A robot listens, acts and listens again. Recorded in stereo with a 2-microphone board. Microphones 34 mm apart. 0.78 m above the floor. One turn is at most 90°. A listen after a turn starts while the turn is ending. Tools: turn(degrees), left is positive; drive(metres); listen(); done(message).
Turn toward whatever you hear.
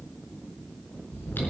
turn(degrees=90)
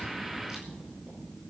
listen()
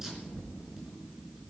turn(degrees=-15)
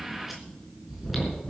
done("Facing the chewing.")